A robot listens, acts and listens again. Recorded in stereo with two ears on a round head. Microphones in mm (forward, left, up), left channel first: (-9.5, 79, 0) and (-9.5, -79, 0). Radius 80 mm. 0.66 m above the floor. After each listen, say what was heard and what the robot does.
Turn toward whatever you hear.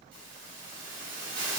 The hiss: about 55° right or 125° right. Turn 55° right.
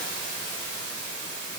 So it is at 70° right. Turn 70° right.
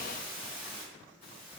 The hiss is now 10° left. Turn 10° left.
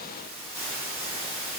Found it: a hiss, straight ahead.